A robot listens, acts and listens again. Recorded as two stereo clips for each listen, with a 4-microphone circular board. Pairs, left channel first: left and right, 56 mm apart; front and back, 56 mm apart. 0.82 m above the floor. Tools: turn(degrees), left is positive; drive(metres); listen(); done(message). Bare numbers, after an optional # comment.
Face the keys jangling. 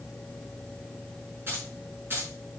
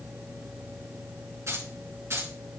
# The keys jangling: 140° right.
turn(-140)
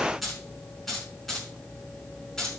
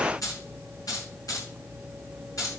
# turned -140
# The keys jangling is now 10° left.
turn(10)
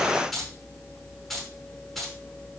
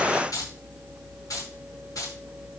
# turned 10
done("Found it: keys jangling, straight ahead.")